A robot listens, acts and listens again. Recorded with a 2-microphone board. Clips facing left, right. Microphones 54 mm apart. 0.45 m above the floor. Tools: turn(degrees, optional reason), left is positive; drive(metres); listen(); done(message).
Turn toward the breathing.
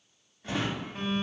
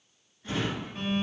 listen()
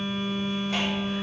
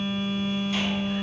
listen()
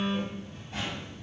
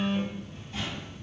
done("I can't make out breathing, only a phone buzzing and a drawer.")